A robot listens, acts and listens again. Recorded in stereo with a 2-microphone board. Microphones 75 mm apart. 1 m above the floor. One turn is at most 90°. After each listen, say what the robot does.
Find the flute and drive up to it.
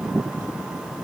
Keep listening.
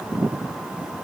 Keep listening.
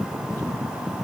I can't make out a flute to turn to.